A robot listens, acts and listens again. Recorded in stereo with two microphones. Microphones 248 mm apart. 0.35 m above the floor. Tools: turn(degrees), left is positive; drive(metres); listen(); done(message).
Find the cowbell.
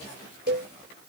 turn(degrees=-40)
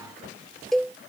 done("Found it: a cowbell, straight ahead.")